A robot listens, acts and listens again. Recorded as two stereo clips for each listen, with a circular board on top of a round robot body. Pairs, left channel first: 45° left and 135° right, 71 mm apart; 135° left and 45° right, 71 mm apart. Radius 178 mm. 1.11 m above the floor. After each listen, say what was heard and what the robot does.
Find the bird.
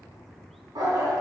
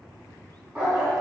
Keep listening.
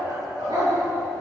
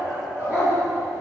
Keep listening.
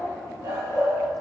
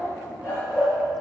I can't make out a bird, only a dog barking.